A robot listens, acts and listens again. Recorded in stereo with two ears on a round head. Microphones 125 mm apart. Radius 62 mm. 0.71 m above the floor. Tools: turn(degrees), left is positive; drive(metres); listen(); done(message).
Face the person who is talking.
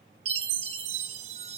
listen()
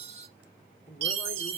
turn(degrees=60)
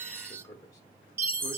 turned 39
turn(degrees=25)
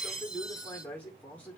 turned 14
turn(degrees=10)
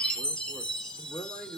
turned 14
done("Facing the man speaking, 2 to 4 m away.")